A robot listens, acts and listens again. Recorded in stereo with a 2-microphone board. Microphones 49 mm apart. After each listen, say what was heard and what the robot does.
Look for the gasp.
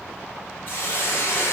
Keep listening.
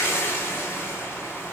Keep listening.
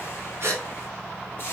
The gasp: about 55° right or 125° right. Turn 55° right.
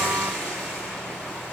Keep listening.
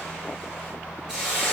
I heard a gasp, but can't make it out now. It was about straight ahead or 70° right.